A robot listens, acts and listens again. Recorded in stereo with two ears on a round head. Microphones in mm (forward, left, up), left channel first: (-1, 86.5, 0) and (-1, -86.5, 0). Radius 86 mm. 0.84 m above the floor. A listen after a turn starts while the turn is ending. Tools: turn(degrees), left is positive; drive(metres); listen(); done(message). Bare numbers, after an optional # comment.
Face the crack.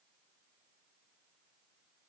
listen()
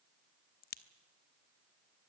# The crack: about 50° left or 130° left.
turn(50)
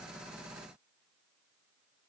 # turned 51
listen()
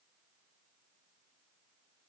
done("I heard a crack, but can't make it out now. It was about straight ahead or 80° left.")